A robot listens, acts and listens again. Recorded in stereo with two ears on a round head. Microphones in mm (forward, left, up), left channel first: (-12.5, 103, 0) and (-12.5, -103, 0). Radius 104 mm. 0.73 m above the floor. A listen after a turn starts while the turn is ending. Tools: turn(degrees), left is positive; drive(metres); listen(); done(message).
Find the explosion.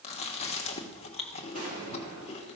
turn(degrees=-40)
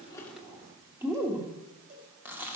listen()
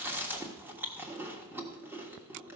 done("I heard an explosion, but can't make it out now. It was about straight ahead or 100° right.")